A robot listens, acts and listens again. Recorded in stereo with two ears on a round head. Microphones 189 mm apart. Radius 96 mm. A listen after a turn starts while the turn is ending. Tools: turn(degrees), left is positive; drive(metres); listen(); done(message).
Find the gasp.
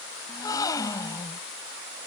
turn(degrees=20)
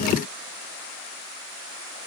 listen()
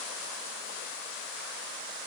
done("I heard a gasp, but can't make it out now. It was about straight ahead or 140° left.")